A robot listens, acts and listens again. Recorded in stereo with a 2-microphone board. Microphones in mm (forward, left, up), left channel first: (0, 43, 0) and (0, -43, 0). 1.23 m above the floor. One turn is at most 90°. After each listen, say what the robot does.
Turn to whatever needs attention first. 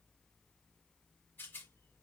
Keep listening.
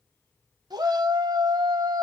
Turn 50° right.
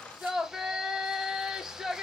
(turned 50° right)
Facing the shout.